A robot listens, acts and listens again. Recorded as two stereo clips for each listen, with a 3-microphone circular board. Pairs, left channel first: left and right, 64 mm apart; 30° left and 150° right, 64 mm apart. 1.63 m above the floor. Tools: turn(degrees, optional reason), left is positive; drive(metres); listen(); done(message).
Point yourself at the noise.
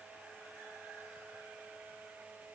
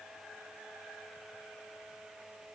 listen()
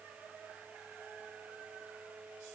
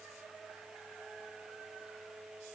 listen()
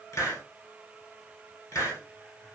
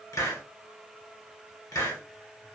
turn(degrees=50, reason="The hiss: 50° left.")
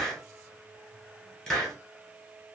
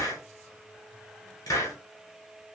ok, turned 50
turn(degrees=10, reason="The hiss is now 10° left.")
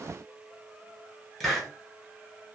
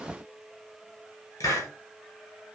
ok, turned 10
done("Facing the hiss, 1 to 2 m away.")